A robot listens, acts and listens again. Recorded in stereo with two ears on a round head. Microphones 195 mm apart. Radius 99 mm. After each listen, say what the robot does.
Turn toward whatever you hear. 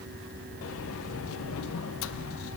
Turn 70° left.
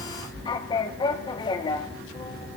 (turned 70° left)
Turn 20° left.
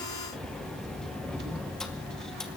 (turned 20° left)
Facing the sliding door, under 1 m away.